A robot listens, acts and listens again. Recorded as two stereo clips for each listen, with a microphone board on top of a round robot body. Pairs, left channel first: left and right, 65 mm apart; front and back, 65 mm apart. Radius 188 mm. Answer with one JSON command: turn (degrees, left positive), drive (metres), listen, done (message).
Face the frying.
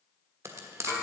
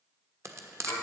{"turn": -135}
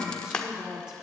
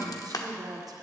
{"turn": 15}
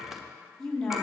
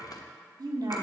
{"listen": true}
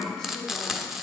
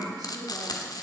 {"done": "Found it: frying, straight ahead."}